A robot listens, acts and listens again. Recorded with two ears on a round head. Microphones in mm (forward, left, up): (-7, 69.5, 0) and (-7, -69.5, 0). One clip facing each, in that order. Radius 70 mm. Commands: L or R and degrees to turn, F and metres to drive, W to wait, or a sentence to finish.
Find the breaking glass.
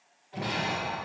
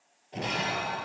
R45
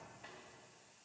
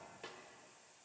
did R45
W
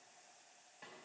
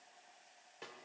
I heard breaking glass, but can't make it out now. It was about straight ahead or 90° right.